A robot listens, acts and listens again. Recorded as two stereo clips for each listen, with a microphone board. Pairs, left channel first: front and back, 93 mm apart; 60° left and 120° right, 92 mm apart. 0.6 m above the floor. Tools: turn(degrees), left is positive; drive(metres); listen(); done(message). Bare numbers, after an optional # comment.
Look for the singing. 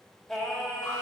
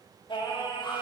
# The singing: 80° left.
turn(80)
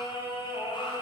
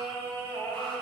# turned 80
# The singing is now 15° right.
turn(-15)
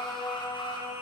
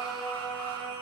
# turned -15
done("Facing the singing, 2 to 4 m away.")